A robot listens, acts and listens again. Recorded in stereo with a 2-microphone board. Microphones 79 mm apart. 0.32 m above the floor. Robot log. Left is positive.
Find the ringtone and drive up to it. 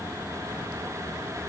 cmd idle
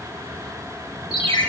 cmd yaw +90
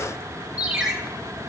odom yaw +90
cmd fwd 1.0
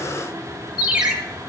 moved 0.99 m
note: The ringtone is now 10° right.
cmd yaw -10
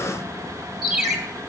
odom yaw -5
cmd fwd 1.0
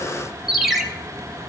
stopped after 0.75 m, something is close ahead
end: I am next to the ringtone.